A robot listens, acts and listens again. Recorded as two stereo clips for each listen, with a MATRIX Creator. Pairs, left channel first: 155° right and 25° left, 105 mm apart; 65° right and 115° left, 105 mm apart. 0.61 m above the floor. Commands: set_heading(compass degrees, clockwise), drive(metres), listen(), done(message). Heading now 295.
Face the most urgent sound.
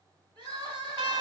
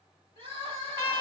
set_heading(225)
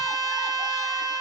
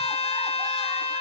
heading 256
set_heading(226)
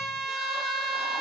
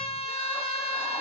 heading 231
listen()
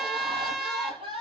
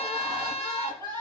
done("Facing the crying, over 4 m away.")